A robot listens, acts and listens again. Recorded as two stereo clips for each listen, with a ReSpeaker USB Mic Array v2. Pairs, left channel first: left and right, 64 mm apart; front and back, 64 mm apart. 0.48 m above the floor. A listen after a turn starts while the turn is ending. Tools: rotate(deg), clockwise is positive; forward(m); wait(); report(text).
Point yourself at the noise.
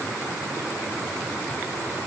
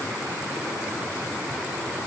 wait()
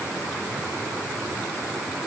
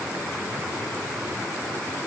wait()
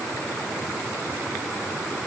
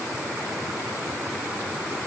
report("I can't make out anything to turn to.")